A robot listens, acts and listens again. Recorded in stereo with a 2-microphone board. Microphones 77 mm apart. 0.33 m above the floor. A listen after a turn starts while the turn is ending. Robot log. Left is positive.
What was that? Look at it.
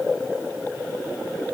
cmd idle
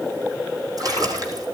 note: The splash: about 50° right or 130° right.
cmd yaw -50
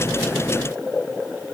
cmd idle
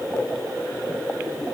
end: I heard a splash, but can't make it out now. It was about straight ahead or 80° right.